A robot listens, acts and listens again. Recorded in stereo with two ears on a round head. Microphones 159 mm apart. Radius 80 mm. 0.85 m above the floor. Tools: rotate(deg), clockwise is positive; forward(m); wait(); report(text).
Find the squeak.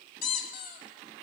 rotate(-50)
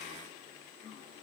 wait()
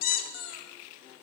rotate(-80)
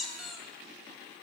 report("Found it: a squeak, straight ahead.")